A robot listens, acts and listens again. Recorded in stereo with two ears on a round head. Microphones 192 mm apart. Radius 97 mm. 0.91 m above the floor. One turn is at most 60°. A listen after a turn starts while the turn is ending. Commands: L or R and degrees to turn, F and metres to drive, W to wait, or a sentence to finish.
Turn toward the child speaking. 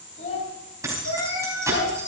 L35
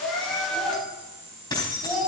Facing the child speaking.